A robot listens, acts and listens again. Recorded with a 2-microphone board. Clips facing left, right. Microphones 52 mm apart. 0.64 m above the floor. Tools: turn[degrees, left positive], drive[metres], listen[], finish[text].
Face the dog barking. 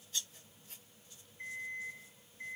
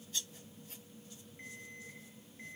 Action: listen[]
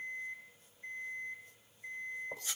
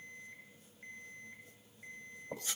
Action: listen[]
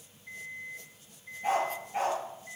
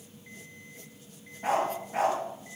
Action: turn[-90]
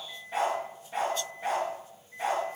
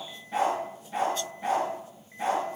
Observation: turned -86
Action: finish[Found it: a dog barking, straight ahead.]